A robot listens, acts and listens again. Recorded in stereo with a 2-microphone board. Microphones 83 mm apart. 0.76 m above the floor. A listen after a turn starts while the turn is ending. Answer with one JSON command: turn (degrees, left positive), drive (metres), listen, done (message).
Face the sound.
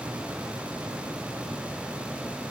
{"listen": true}
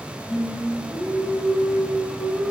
{"turn": 30}
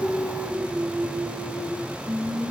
{"turn": -15}
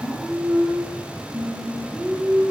{"done": "Found it: singing, straight ahead, over 4 m away."}